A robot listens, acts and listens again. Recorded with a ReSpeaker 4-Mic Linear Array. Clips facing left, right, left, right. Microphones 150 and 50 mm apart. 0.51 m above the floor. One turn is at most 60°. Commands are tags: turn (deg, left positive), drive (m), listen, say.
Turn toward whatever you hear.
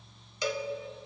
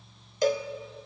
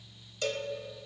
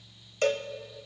<turn deg="-45"/>
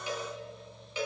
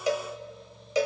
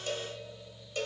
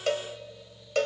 <turn deg="-60"/>
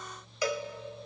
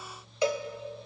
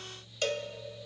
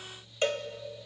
<turn deg="-25"/>
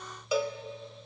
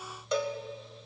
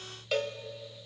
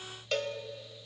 <say>Facing the cowbell.</say>